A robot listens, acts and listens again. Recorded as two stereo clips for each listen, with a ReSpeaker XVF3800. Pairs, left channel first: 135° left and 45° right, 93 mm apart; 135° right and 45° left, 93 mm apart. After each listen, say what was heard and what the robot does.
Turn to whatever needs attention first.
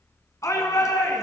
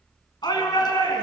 The shout: 170° right. Turn 170° right.
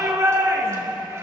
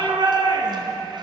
The shout is now 10° left. Turn 10° left.
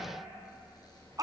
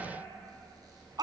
Facing the shout.